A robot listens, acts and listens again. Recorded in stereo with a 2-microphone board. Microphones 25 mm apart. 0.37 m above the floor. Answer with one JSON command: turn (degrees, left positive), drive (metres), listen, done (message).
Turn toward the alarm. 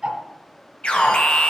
{"turn": 55}
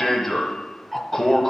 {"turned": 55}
{"turn": 10}
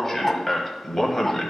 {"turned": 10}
{"done": "Found it: an alarm, straight ahead, 1 to 2 m away."}